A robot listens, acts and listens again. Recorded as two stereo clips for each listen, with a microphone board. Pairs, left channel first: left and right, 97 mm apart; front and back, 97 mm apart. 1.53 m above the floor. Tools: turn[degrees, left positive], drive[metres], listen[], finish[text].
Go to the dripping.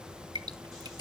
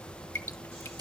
Thought: The dripping: 65° right.
Action: turn[-65]
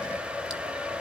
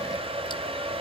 Action: listen[]
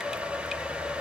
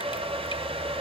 Action: listen[]
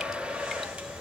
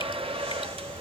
Action: finish[Facing where the dripping came from. I can't hear it now. I did not reach it.]